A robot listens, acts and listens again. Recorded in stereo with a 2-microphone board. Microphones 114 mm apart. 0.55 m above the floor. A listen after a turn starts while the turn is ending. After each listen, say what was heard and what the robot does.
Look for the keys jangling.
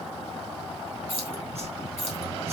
The keys jangling: about 75° right or 105° right. Turn 75° right.
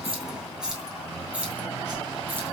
So it is at 10° right. Turn 10° right.
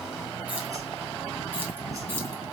Keep listening.
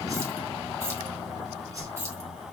Keep listening.
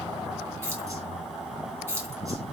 The keys jangling is now 25° right. Turn 25° right.
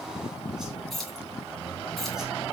Found it: keys jangling, straight ahead, 2 to 4 m away.